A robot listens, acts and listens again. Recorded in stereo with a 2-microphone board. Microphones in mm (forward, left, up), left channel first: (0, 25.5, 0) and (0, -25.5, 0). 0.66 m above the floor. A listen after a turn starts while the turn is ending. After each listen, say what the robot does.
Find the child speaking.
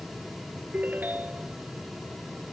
Keep listening.
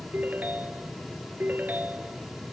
Keep listening.
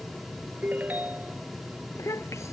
Turn 70° left.
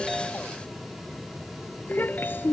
Turn 45° left.
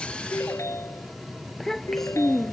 Turn 10° left.
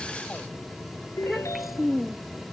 Found it: a child speaking, straight ahead.